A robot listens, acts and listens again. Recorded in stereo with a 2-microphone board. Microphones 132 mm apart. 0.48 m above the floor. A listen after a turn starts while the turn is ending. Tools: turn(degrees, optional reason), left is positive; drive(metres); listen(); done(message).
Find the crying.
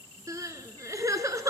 turn(degrees=-25, reason="The crying: about 25° right or 155° right.")
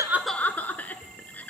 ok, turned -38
turn(degrees=10, reason="So it is at 10° left.")
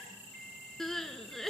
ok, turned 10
done("Found it: crying, straight ahead, 1 to 2 m away.")